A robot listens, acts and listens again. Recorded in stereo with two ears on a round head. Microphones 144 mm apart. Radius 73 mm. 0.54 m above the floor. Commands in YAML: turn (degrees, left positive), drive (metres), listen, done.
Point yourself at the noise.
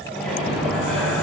turn: 30
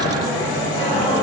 turn: 150
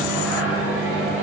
turn: -10
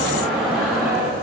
done: "Found it: a microwave, straight ahead."